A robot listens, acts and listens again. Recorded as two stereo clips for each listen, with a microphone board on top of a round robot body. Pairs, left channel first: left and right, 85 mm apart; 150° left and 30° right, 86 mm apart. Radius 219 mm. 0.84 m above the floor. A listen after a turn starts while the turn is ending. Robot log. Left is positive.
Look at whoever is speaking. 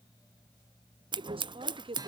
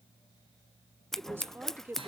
note: The woman speaking: 95° right.
cmd yaw -95
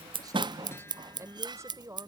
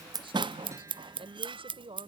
note: The woman speaking is now 35° right.
cmd yaw -35
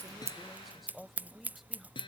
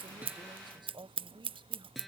end: Found it: a woman speaking, straight ahead.